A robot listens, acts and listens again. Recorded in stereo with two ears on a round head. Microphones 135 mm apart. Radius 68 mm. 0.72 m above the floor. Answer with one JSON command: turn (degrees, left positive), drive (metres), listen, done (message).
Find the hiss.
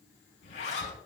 {"listen": true}
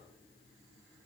{"listen": true}
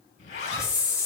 {"turn": 20}
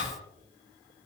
{"listen": true}
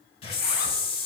{"turn": 140}
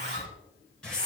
{"done": "Found it: a hiss, straight ahead."}